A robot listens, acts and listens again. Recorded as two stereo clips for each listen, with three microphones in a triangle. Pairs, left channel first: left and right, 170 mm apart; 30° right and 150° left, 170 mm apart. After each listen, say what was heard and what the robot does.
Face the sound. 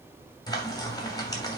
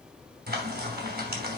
The frying: 155° left. Turn 155° left.
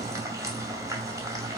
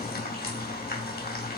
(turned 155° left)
The frying is now 20° right. Turn 20° right.
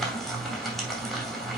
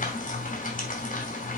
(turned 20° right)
Found it: frying, straight ahead, 2 to 4 m away.